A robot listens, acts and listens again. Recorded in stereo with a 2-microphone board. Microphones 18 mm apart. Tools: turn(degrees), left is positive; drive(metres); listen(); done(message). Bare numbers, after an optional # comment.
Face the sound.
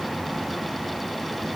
listen()
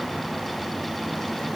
listen()
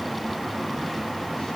done("I can't make out anything to turn to.")